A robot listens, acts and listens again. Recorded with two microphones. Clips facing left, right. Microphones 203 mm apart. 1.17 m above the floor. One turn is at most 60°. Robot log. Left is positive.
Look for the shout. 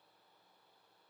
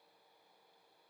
cmd idle
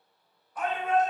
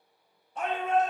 note: The shout: about 25° right or 155° right.
cmd yaw -25
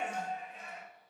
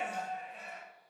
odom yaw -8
note: The shout: about 35° right or 145° right.
cmd yaw -35
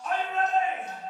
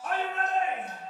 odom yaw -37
note: So it is at 105° right.
cmd yaw -60
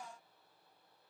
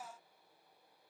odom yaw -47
note: Nothing new. It was at 55° right.
cmd yaw -55
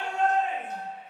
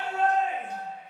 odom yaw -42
note: The shout is now 15° right.
cmd yaw -15
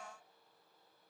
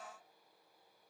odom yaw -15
cmd idle
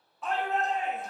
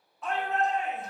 end: Facing the shout.